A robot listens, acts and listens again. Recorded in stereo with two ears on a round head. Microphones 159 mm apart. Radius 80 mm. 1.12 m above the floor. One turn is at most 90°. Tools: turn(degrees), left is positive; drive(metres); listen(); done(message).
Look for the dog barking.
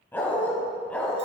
turn(degrees=30)
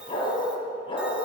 turn(degrees=90)
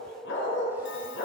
turn(degrees=75)
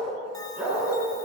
done("Facing the dog barking.")